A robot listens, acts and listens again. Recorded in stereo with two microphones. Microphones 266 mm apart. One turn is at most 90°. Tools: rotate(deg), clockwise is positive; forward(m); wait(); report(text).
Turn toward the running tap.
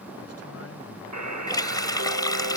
rotate(-30)
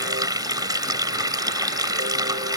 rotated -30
rotate(15)
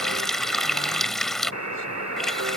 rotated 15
report("Found it: a running tap, straight ahead.")